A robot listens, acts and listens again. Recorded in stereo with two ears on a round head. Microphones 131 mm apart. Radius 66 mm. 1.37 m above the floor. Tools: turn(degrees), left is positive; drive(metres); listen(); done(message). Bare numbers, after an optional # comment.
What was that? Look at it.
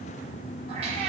# The cat meowing: about 45° right or 135° right.
turn(-45)
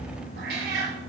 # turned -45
# So it is at 90° right.
turn(-90)
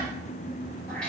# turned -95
done("Facing the cat meowing.")